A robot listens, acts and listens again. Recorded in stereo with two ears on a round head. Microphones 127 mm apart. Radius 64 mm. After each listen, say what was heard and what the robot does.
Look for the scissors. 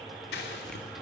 Turn 90° left.
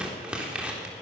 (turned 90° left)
So it is at 10° right. Turn 10° right.
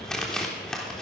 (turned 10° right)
Found it: scissors, straight ahead.